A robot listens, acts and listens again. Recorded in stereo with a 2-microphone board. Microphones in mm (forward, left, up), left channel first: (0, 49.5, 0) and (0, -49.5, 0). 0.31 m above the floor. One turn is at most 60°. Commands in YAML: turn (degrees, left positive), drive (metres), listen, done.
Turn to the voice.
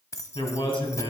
turn: 60
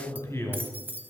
turn: 30
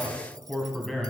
done: "Facing the man speaking, 2 to 4 m away."